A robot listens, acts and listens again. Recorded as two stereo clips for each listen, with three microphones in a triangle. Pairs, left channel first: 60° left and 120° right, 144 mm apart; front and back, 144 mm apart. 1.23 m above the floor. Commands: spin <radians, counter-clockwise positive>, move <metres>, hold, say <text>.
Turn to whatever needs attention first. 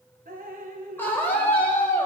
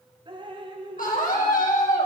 spin -0.26
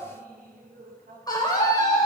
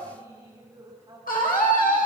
say Found it: a scream, straight ahead, over 4 m away.